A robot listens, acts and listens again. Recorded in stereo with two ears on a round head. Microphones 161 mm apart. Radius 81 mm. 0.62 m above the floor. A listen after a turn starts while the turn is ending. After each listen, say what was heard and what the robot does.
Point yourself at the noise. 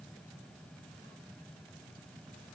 Keep listening.
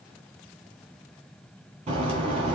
The bird: about 35° right or 145° right. Turn 35° right.
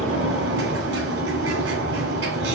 So it is at 110° right. Turn 110° right.
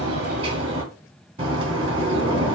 The bird is now 35° right. Turn 35° right.
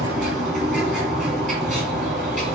Facing the bird, 2 to 4 m away.